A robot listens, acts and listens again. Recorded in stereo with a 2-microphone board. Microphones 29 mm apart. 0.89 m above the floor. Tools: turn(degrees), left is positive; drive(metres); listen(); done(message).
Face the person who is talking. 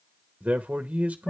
turn(degrees=-60)
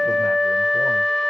listen()
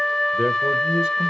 turn(degrees=-20)
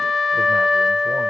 listen()
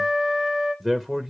done("Facing the man speaking, under 1 m away.")